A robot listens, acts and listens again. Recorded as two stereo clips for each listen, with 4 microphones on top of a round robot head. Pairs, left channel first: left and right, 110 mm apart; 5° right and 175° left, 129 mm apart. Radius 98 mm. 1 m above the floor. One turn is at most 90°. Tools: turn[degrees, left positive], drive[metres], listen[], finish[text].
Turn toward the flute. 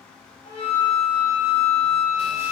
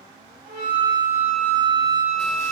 Thought: The flute: 130° left.
Action: turn[90]
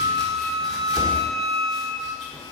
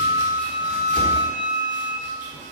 Thought: The flute is now 50° left.
Action: turn[50]
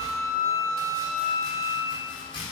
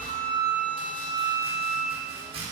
Action: finish[Found it: a flute, straight ahead, 1 to 2 m away.]